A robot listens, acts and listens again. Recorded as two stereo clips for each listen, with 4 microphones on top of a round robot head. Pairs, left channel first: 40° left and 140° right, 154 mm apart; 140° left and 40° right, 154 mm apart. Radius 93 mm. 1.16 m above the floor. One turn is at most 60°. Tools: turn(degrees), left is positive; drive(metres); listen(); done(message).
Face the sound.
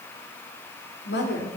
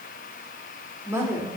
turn(degrees=35)
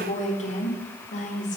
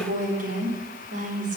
done("Facing the woman speaking.")